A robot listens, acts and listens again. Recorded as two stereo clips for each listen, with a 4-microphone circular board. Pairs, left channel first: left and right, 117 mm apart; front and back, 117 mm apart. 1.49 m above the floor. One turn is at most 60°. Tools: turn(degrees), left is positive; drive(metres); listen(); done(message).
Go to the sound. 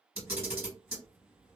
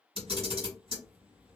turn(degrees=-60)
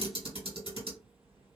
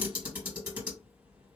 turn(degrees=-60)
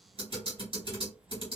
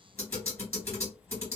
turn(degrees=-60)
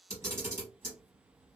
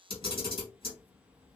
turn(degrees=-25)
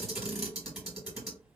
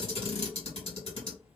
drive(metres=1.0)
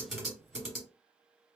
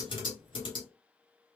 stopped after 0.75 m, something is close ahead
done("I am next to the camera shutter.")